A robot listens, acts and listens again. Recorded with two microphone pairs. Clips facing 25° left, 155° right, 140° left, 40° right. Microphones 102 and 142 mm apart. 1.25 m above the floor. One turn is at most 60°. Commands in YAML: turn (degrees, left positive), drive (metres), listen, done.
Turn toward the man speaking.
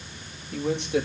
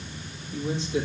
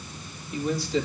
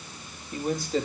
done: "Facing the man speaking."